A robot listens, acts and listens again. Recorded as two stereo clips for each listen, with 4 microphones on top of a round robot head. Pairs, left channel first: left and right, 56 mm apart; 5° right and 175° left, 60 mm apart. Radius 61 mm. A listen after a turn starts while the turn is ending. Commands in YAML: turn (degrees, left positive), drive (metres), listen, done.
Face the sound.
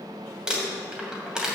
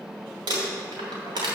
turn: -170
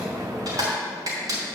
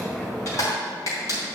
turn: -55
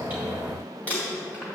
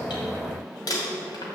turn: 20
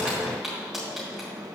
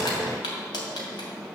done: "Found it: crumpling, straight ahead."